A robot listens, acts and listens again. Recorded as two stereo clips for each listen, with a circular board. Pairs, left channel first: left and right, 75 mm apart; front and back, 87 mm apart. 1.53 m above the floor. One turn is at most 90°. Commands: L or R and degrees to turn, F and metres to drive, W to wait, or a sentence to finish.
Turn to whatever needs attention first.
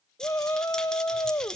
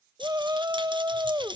L90
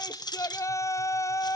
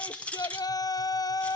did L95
L40
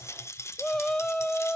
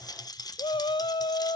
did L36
Facing the shout.